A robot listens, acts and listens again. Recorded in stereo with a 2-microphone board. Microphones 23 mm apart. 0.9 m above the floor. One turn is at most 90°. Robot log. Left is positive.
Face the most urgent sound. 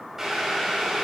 cmd idle
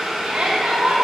note: The shout: about 75° right or 105° right.
cmd yaw -75
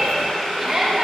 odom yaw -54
note: So it is at 25° right.
cmd yaw -25
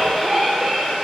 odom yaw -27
end: Found it: a shout, straight ahead, 1 to 2 m away.